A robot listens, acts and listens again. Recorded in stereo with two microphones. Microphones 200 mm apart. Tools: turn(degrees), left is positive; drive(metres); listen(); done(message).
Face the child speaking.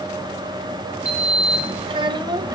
turn(degrees=-20)
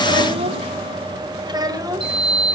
turn(degrees=-15)
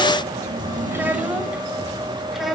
turn(degrees=30)
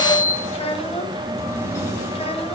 turn(degrees=150)
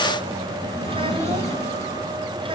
listen()
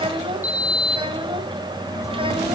turn(degrees=-25)
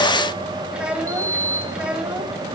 done("Facing the child speaking, 2 to 4 m away.")